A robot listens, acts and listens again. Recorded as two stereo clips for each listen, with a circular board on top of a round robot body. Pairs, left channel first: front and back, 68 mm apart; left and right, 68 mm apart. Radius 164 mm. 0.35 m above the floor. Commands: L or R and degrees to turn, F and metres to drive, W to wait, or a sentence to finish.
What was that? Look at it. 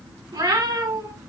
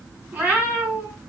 R155
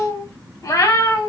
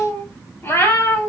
L40
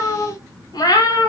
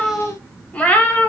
L25
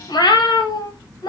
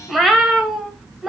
Facing the cat meowing.